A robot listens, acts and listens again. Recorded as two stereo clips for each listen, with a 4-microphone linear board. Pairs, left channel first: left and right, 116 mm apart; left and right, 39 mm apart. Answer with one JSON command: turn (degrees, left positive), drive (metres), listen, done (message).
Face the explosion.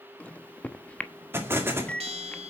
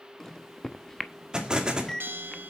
{"turn": -20}
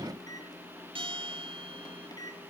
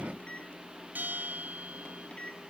{"listen": true}
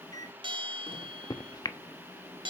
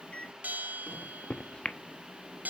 {"done": "I heard an explosion, but can't make it out now. It was about straight ahead or 140° right."}